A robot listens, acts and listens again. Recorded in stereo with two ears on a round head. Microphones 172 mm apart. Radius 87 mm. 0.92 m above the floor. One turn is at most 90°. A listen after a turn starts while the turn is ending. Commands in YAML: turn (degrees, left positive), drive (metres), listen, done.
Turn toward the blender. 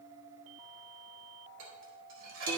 listen: true
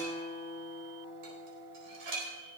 listen: true
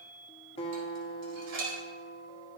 done: "I can't make out a blender to turn to."